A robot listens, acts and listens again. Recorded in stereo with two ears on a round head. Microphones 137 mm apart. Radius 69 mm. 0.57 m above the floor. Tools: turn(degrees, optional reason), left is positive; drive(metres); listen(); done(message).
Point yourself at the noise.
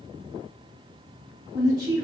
turn(degrees=-25, reason="The woman speaking: about 25° right or 155° right.")
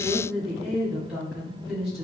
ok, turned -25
done("Found it: a woman speaking, straight ahead.")